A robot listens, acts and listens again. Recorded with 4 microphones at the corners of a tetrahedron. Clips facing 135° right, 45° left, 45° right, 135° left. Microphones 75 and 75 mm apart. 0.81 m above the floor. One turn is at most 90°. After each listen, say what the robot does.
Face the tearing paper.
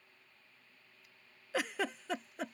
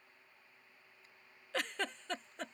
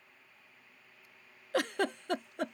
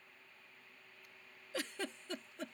Keep listening.
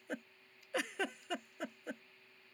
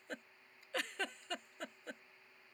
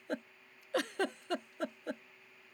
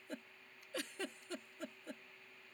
Keep listening.
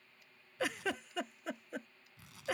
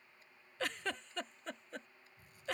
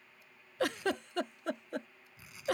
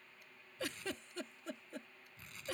Turn 90° right.
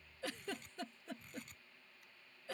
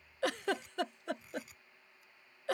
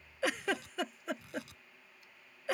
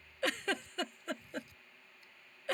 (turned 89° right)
Turn 40° right.
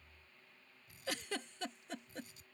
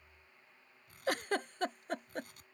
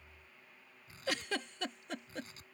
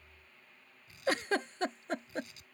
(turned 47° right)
Turn 10° left.
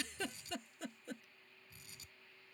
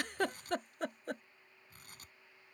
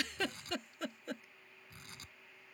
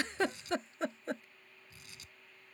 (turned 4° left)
Facing the tearing paper.